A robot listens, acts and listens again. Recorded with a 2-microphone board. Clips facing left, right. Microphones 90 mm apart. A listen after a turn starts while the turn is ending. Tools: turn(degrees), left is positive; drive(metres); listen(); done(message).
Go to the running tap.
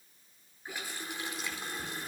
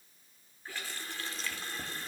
turn(degrees=30)
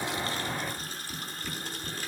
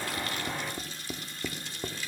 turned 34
turn(degrees=130)
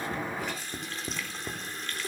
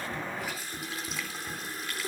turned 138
drive(metres=1.0)
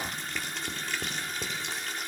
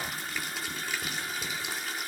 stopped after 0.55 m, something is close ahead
done("Blocked. The running tap is further on, straight ahead.")